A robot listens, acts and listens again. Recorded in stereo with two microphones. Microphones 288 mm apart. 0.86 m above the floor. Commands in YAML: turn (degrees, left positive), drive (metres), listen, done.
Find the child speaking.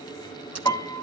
listen: true
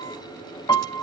listen: true
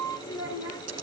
turn: 90
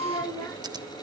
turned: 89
turn: 10
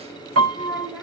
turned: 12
done: "Found it: a child speaking, straight ahead, 1 to 2 m away."